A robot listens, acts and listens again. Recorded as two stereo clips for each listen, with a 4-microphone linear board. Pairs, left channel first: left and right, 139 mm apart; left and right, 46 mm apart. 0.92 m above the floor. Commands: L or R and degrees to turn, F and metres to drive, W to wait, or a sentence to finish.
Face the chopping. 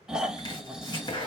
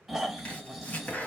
L40
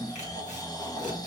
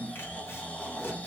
W
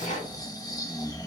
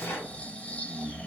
L100
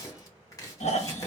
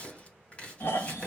L25
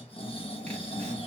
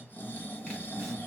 W
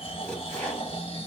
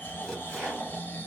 L10
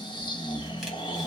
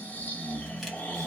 W
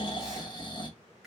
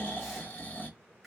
W
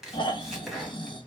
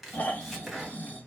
Found it: chopping, straight ahead, 1 to 2 m away.